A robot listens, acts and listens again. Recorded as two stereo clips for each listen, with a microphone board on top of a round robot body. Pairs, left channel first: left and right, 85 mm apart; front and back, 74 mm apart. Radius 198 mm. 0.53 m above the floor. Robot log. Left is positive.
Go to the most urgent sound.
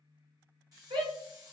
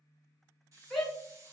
note: The shout: 85° right.
cmd yaw -85
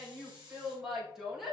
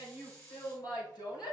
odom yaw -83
cmd fwd 1.0
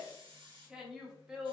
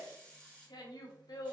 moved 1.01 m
note: The shout is now 10° right.
cmd yaw -10
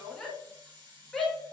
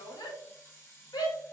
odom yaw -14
cmd fwd 1.0
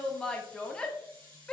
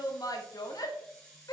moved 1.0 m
note: The shout is now 10° left.
cmd yaw +10
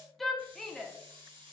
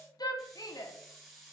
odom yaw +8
cmd fwd 1.0
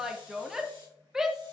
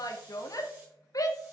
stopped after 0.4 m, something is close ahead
note: The shout is now 10° right.
cmd yaw -10
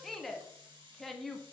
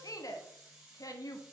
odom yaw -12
end: Arrived at the shout, straight ahead.